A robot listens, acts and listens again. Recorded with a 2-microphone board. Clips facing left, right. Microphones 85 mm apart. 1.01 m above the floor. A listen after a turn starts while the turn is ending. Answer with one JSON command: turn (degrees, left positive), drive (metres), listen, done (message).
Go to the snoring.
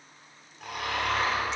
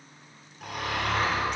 {"turn": 30}
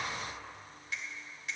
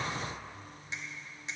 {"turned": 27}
{"listen": true}
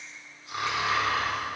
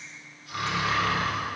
{"turn": 150}
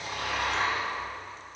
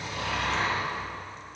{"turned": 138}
{"turn": 15}
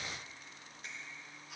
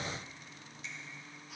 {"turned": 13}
{"drive": 1.0}
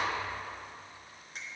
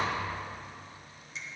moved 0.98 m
{"listen": true}
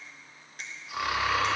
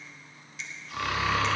{"turn": 10}
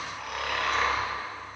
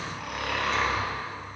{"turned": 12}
{"drive": 1.0}
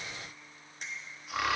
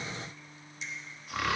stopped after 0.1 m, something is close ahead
{"done": "Arrived at the snoring, straight ahead."}